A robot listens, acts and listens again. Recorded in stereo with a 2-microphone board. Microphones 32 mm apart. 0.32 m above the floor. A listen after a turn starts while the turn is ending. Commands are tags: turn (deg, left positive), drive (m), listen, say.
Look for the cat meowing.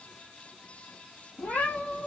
<turn deg="90"/>
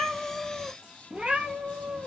<turn deg="-50"/>
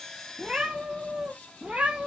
<turn deg="-45"/>
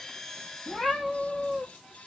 <say>Facing the cat meowing, 1 to 2 m away.</say>